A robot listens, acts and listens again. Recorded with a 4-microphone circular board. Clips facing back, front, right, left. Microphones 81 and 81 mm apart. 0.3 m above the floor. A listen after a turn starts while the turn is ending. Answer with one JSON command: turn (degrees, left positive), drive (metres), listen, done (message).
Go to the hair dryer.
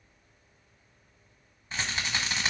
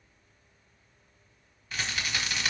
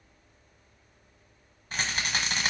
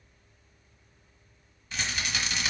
{"listen": true}
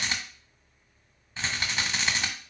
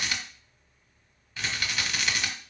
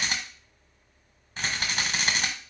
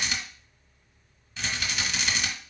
{"listen": true}
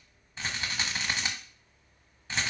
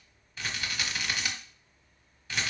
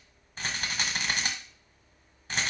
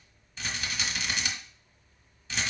{"done": "I can't make out a hair dryer to turn to."}